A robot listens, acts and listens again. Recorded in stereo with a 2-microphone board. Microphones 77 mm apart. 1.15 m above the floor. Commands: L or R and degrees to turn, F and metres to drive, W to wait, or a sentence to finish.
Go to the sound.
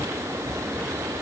W
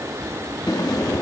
L60
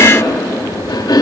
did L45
L75
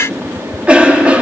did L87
R15
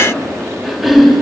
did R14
F1.0
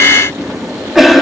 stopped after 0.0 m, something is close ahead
Blocked. The cough is further on, straight ahead.